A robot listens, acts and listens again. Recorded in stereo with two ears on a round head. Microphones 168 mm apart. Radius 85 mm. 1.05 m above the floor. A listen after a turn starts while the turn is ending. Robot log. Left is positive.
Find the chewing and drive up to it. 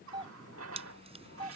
note: The chewing: about 35° right or 145° right.
cmd yaw -35
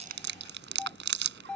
note: So it is at 115° right.
cmd yaw -115
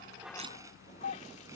cmd idle
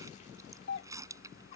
cmd idle
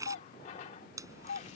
note: The chewing is now 15° right.
cmd yaw -15
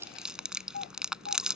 cmd fwd 1.0
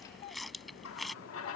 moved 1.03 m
cmd fwd 1.0
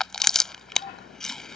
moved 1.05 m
cmd fwd 1.0
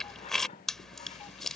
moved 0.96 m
cmd fwd 1.0
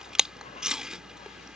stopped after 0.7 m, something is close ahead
end: Arrived at the chewing, straight ahead.